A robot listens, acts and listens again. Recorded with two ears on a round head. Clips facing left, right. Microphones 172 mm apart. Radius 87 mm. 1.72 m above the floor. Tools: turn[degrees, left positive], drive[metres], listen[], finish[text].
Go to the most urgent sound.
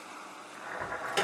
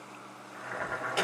Thought: The alarm: about 20° left or 160° left.
Action: turn[20]
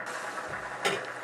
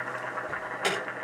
Action: drive[1.0]
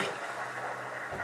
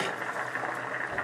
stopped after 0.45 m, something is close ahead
Action: listen[]
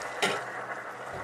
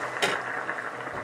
Action: finish[Blocked. The alarm is further on, straight ahead.]